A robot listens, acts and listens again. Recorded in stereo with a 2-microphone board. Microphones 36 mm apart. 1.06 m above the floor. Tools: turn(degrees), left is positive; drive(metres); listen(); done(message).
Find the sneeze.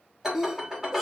turn(degrees=30)
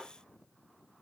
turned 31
listen()
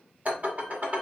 done("I heard a sneeze, but can't make it out now. It was about 25° right or 145° left.")